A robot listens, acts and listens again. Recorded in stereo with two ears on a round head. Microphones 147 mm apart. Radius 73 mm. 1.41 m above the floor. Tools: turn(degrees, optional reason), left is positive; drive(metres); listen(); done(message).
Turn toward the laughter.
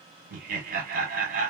turn(degrees=-55, reason="The laughter: about 55° right or 125° right.")
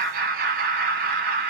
turn(degrees=-65, reason="So it is at 65° right.")
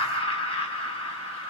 turn(degrees=35, reason="The laughter is now 35° left.")
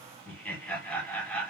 turn(degrees=10, reason="The laughter is now 10° left.")
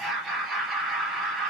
done("Facing the laughter, 1 to 2 m away.")